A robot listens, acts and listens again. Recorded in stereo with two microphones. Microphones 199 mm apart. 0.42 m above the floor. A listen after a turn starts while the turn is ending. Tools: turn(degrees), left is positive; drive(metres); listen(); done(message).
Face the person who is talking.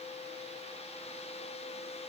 listen()
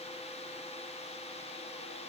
listen()
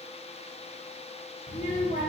turn(degrees=45)
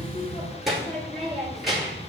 done("Found it: a child speaking, straight ahead, 2 to 4 m away.")